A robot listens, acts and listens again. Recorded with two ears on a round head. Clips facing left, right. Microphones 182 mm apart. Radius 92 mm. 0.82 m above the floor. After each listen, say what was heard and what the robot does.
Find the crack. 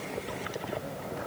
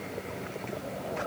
Keep listening.
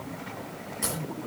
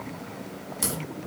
The crack: about 40° right or 140° right. Turn 40° right.
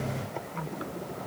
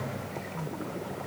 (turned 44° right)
Keep listening.
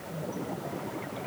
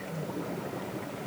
I heard a crack, but can't make it out now. It was about straight ahead or 95° right.